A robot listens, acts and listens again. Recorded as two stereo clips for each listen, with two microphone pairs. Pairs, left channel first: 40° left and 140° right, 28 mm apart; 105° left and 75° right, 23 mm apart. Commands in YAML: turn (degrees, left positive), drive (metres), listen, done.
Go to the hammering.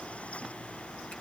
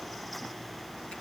listen: true
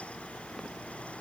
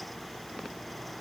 listen: true
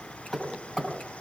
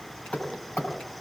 turn: 110
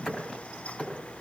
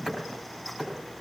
drive: 1.0
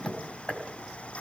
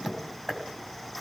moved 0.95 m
drive: 1.0
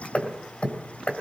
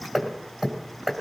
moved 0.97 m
drive: 1.0
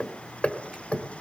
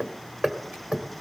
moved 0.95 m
turn: -10
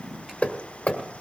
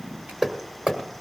drive: 1.0
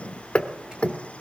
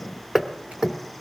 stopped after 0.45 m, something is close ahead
done: "I am next to the hammering."